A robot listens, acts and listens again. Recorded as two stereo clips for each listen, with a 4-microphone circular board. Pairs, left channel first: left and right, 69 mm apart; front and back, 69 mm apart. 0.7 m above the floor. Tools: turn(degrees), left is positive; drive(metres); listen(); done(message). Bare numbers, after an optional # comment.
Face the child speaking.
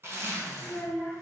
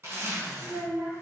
# The child speaking: 165° left.
turn(165)
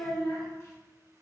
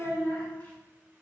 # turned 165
# The child speaking is now 65° left.
turn(65)
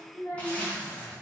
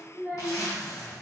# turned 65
# The child speaking is now 55° left.
turn(55)
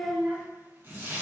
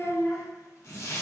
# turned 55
done("Found it: a child speaking, straight ahead.")